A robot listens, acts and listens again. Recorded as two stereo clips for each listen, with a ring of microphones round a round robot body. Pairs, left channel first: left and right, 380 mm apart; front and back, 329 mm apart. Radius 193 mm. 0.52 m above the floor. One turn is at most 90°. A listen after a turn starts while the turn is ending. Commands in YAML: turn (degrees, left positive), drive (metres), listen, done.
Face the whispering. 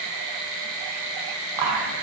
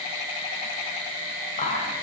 turn: -65
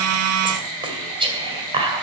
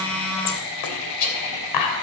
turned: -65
turn: -15
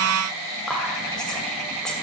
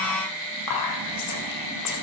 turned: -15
done: "Found it: whispering, straight ahead, 2 to 4 m away."